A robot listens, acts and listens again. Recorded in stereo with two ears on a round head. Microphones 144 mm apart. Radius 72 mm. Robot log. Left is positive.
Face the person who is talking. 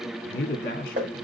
note: The man speaking: about 55° left or 125° left.
cmd yaw +55
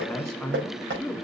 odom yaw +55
end: Found it: a man speaking, straight ahead.